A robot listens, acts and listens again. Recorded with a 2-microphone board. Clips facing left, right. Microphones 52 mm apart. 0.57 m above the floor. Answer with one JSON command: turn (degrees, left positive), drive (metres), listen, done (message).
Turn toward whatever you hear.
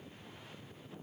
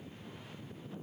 {"listen": true}
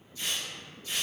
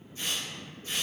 {"turn": -45}
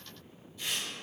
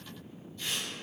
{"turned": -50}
{"done": "Facing the tearing paper."}